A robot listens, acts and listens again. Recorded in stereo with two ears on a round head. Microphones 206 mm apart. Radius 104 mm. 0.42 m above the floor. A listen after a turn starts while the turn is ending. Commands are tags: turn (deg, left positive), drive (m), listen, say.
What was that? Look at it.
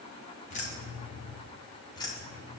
<turn deg="30"/>
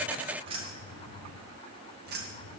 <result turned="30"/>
<turn deg="-50"/>
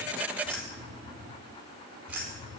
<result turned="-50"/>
<turn deg="-10"/>
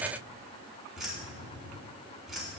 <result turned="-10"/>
<say>Found it: keys jangling, straight ahead, 2 to 4 m away.</say>